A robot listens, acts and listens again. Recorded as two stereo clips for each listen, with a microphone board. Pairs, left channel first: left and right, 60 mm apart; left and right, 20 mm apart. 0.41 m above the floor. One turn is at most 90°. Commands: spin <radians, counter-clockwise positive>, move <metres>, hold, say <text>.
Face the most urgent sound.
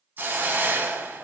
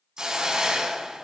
hold
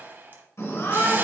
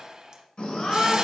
spin 1.31
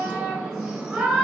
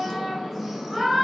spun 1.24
say Facing the shout.